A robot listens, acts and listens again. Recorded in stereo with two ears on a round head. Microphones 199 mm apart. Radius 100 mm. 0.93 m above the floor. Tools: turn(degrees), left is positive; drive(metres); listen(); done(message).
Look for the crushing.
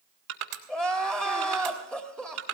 turn(degrees=-90)
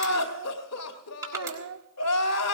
turn(degrees=-15)
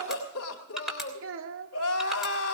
done("Found it: crushing, straight ahead.")